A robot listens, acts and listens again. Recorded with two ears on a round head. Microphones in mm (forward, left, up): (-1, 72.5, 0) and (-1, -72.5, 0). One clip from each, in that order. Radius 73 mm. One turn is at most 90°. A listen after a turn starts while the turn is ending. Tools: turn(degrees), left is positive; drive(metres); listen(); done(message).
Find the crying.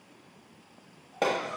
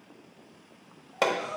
turn(degrees=-55)
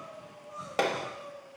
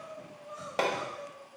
turn(degrees=-60)
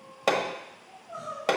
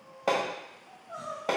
turn(degrees=-25)
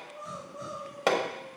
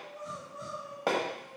done("Found it: crying, straight ahead.")